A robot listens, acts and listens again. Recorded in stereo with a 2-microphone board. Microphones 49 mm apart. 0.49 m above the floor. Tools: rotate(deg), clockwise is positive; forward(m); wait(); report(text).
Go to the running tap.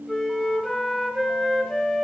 wait()
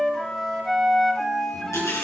rotate(-90)
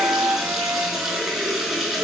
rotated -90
forward(1.0)
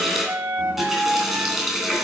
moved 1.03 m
forward(1.0)
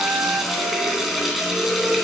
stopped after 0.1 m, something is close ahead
report("Blocked. The running tap is further on, straight ahead.")